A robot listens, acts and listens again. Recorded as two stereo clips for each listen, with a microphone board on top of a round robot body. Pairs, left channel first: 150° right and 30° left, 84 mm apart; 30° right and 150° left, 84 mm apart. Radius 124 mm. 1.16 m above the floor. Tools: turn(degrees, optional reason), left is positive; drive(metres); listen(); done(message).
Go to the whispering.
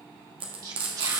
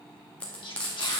turn(degrees=-10, reason="The whispering: 10° right.")
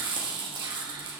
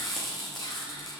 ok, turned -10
listen()
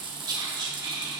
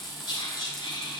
drive(metres=1.0)
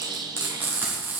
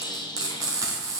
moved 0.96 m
drive(metres=1.0)
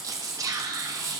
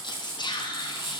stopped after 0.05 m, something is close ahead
turn(degrees=-10, reason="The whispering is now 10° right.")
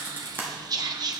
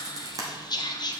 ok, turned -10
done("I am next to the whispering.")